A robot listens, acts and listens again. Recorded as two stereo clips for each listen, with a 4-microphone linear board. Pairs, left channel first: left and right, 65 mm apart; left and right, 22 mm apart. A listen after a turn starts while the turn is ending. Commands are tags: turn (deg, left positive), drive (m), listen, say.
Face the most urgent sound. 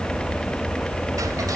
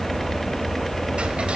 <listen/>
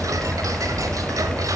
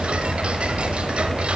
<listen/>
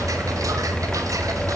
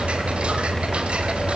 <say>I can't make out anything urgent.</say>